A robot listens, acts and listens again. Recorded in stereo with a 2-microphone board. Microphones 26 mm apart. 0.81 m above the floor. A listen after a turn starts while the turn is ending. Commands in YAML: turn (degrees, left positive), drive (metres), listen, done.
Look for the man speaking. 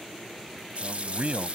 turn: -65
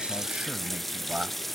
turn: -50
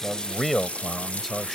done: "Found it: a man speaking, straight ahead."